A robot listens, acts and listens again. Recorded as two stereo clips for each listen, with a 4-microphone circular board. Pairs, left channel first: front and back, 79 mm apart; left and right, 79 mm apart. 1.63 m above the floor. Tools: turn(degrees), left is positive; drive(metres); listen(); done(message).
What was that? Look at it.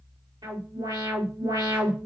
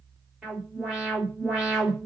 turn(degrees=-175)
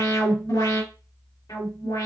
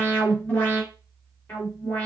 turn(degrees=20)
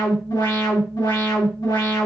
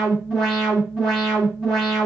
done("Found it: an alarm, straight ahead, 2 to 4 m away.")